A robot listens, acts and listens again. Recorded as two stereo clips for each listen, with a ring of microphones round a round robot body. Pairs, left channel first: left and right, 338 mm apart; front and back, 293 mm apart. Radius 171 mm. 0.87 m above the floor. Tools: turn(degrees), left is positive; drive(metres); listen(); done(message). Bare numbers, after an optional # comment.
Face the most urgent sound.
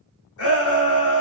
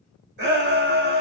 # The shout: 130° left.
turn(130)
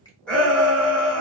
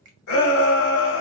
done("Found it: a shout, straight ahead, 1 to 2 m away.")